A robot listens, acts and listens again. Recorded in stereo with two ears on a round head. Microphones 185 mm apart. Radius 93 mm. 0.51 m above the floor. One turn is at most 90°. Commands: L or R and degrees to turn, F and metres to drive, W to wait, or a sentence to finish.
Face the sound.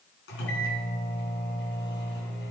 L60
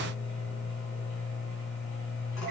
L60
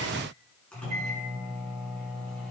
Found it: a microwave, straight ahead, over 4 m away.